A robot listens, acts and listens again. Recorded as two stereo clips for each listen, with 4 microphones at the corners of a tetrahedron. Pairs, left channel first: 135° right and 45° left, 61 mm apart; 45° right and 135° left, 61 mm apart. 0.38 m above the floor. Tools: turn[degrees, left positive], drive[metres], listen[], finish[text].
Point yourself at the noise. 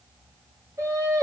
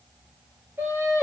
Thought: The singing: 80° left.
Action: turn[80]
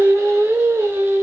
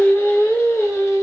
Thought: The singing is now 10° right.
Action: turn[-10]
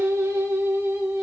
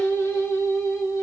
Thought: The singing is now 15° right.
Action: turn[-15]
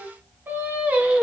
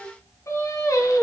Thought: The singing is now 25° right.
Action: turn[-25]
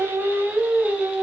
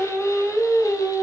Thought: The singing is now 25° right.
Action: turn[-25]
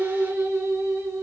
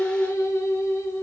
Action: finish[Facing the singing, 1 to 2 m away.]